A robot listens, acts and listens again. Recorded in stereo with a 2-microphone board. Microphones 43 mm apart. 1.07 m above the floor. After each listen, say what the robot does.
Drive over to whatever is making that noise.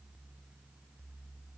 Keep listening.
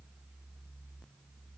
Keep listening.
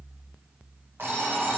Turn 65° right.
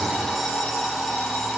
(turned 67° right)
Drive 1.0 m forward.
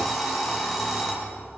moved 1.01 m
Drive 1.0 m forward.
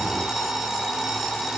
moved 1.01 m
Drive 1.0 m forward.
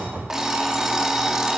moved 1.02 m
Turn 15° right.
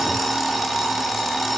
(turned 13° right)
Drive 1.0 m forward.
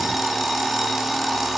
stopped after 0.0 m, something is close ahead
Arrived at the alarm clock, straight ahead.